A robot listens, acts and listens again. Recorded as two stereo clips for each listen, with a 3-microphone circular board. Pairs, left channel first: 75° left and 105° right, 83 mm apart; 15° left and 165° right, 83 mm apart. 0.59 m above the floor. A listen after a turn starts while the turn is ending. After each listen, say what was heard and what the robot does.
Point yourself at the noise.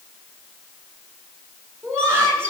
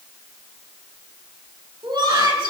The laughter: 160° right. Turn 160° right.
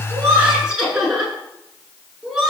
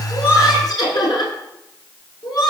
The laughter is now 20° right. Turn 20° right.
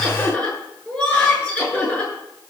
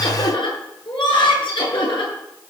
Found it: laughter, straight ahead.